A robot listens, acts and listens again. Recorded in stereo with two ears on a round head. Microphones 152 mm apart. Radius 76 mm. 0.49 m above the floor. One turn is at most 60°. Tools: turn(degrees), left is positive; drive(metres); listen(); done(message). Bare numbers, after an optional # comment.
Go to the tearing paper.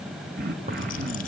# The tearing paper: about 40° right or 140° right.
turn(-40)
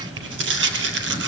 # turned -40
# So it is at 100° right.
turn(-60)
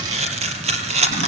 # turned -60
# The tearing paper is now 40° right.
turn(-40)
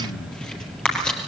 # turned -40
drive(1.0)
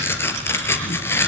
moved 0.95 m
# The tearing paper is now 15° left.
turn(15)
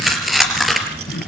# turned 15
drive(1.0)
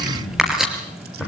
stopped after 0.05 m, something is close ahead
done("Blocked. The tearing paper is further on, straight ahead.")